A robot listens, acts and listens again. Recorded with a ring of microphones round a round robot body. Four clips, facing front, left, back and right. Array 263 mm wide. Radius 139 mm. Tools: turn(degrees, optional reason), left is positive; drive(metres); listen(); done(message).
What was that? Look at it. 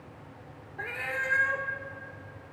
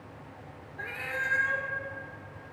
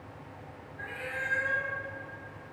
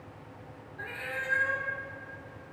turn(degrees=10, reason="The cat meowing: 10° left.")
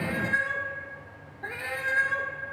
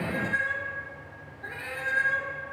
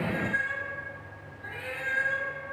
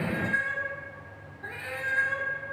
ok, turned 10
done("Facing the cat meowing.")